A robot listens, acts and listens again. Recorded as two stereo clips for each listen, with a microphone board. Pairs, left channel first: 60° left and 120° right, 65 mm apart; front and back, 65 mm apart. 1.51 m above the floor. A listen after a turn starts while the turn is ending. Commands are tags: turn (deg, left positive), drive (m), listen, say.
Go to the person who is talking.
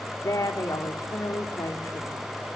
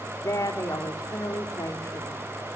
<turn deg="30"/>
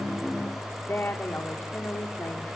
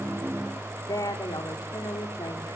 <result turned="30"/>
<drive m="1.0"/>
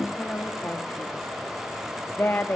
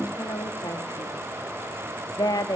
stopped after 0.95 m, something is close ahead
<say>Blocked. The woman speaking is further on, straight ahead.</say>